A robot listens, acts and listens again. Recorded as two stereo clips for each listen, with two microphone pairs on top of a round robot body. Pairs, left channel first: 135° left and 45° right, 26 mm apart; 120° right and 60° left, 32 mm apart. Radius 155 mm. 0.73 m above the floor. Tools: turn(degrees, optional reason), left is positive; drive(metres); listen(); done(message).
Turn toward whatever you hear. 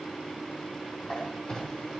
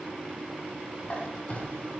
turn(degrees=-170, reason="The squeak: 170° right.")
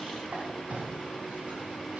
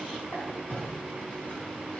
turn(degrees=-70, reason="The squeak is now 70° right.")
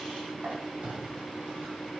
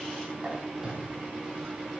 turn(degrees=-15, reason="The squeak is now 15° right.")
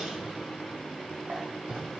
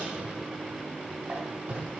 done("Found it: a squeak, straight ahead.")